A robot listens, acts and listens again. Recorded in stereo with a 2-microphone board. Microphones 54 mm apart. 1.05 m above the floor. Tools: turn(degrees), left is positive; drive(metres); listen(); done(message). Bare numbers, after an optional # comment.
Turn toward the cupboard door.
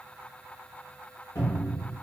# The cupboard door: about 55° left or 125° left.
turn(55)
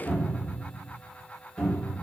# So it is at 15° left.
turn(15)
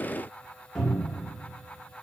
done("Facing the cupboard door.")